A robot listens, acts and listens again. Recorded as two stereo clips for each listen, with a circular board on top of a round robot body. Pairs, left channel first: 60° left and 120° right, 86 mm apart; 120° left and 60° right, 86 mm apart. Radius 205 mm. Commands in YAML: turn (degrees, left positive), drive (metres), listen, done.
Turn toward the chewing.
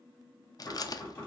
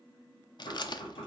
turn: 95
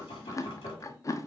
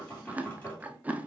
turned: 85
turn: 10
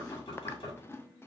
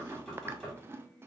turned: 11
done: "Found it: chewing, straight ahead."